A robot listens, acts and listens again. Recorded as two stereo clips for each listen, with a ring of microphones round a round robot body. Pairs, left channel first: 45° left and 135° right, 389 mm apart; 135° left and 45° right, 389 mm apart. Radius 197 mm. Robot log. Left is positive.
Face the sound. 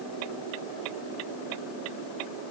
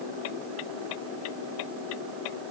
cmd idle
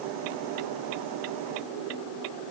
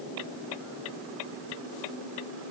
cmd idle
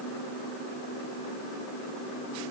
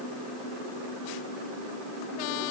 end: I can't make out anything to turn to.